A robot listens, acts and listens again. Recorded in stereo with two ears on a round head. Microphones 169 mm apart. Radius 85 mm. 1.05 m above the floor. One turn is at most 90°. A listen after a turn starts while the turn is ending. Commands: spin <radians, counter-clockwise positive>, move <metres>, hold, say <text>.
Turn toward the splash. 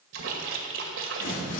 spin -1.57
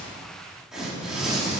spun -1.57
say I heard a splash from this way, but can't make it out now.